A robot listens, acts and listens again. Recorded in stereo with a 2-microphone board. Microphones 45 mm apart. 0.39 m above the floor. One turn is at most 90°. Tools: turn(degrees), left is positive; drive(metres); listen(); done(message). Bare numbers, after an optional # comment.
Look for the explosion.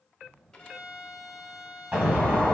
# The explosion: about 30° right or 150° right.
turn(-30)
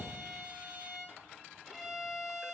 listen()
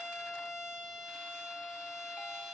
done("I heard an explosion, but can't make it out now. It was about straight ahead or 120° right.")